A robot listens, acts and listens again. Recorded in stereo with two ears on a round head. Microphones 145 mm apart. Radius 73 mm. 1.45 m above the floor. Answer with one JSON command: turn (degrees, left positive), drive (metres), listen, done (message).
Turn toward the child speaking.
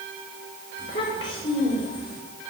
{"turn": 30}
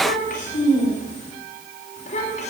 {"turn": 130}
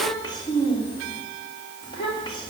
{"turn": 30}
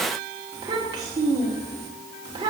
{"turn": -25}
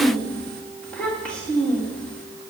{"done": "Found it: a child speaking, straight ahead, 2 to 4 m away."}